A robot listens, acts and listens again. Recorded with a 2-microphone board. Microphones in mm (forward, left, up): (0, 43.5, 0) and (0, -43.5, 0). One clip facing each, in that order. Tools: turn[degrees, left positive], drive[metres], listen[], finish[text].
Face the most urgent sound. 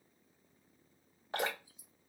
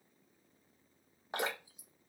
Action: listen[]
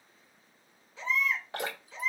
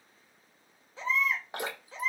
Thought: The baby crying: about 35° right or 145° right.
Action: turn[-35]
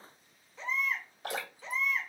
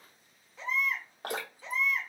Action: finish[Found it: a baby crying, straight ahead.]